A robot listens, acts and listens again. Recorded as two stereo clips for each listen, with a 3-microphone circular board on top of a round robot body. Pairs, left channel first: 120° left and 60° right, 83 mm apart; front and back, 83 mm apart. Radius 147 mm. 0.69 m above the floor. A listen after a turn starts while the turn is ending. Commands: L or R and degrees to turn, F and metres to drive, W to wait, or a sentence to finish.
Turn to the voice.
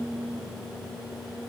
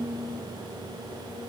W
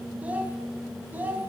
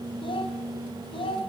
L10
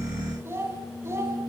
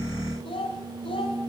Found it: a child speaking, straight ahead.